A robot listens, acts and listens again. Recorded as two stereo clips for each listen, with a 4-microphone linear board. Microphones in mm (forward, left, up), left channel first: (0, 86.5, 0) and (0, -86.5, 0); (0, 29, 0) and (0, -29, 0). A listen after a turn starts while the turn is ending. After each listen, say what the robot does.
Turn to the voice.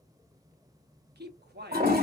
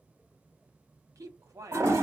Turn 70° right.
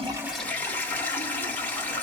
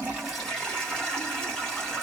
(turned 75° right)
Keep listening.
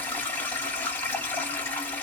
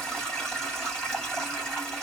Keep listening.
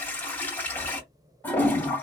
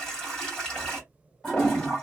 I heard a man speaking, but can't make it out now. It was about 5° left or 35° right.